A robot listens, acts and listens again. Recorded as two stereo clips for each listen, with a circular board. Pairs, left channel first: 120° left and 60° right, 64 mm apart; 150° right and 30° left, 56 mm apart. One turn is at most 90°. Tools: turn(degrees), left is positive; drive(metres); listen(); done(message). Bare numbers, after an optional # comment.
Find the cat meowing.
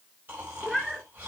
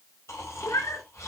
# The cat meowing: 145° right.
turn(-90)
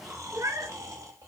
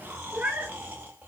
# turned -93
# The cat meowing is now 25° right.
turn(-25)
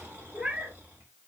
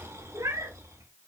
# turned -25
# The cat meowing is now 15° left.
turn(15)
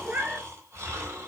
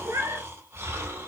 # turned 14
# The cat meowing is now 10° left.
turn(10)
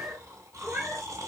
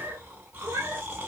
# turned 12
done("Facing the cat meowing.")